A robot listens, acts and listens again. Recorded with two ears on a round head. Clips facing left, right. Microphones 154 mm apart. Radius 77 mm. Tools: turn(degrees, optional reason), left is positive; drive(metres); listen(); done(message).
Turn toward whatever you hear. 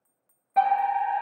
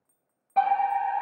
turn(degrees=30)
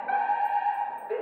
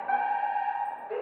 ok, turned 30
turn(degrees=145, reason="So it is at 145° left.")
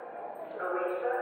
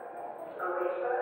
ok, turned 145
turn(degrees=30, reason="The fire alarm is now 30° left.")
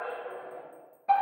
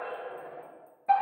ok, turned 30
done("Found it: a fire alarm, straight ahead, 1 to 2 m away.")